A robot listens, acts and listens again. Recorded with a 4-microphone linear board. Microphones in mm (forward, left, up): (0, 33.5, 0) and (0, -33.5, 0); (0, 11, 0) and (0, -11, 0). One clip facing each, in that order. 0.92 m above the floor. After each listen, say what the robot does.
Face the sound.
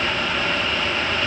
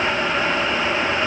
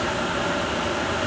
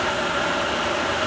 Keep listening.
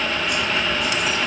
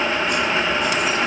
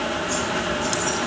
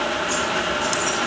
Keep listening.
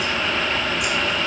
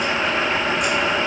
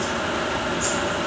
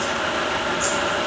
I can't make out anything.